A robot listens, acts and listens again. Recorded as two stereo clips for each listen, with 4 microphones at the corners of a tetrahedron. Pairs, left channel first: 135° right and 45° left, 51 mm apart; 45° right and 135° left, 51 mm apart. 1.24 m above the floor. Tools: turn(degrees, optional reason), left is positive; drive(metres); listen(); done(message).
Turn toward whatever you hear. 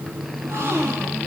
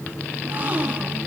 turn(degrees=75, reason="The gasp: 75° left.")
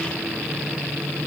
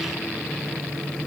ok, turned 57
turn(degrees=20, reason="Nothing new. It was at 20° left.")
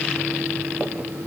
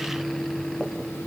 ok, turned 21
done("I heard a gasp from this way, but can't make it out now.")